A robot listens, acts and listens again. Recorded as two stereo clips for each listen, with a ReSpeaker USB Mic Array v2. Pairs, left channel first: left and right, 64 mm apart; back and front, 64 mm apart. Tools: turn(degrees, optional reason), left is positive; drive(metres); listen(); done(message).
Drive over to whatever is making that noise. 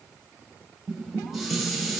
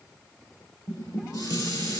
turn(degrees=-175, reason="The dishes clattering: 175° right.")
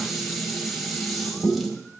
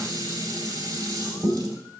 drive(metres=1.0)
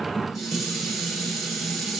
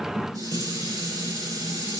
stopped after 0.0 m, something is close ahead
done("Something is in my way. I am facing the dishes clattering but have not reached it.")